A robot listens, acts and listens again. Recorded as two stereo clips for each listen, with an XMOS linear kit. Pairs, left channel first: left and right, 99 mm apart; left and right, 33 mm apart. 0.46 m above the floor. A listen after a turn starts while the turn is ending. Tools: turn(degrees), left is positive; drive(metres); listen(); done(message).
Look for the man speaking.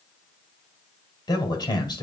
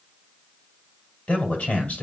turn(degrees=45)
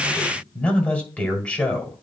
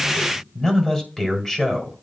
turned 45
turn(degrees=15)
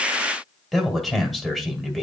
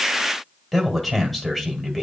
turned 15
done("Facing the man speaking, 2 to 4 m away.")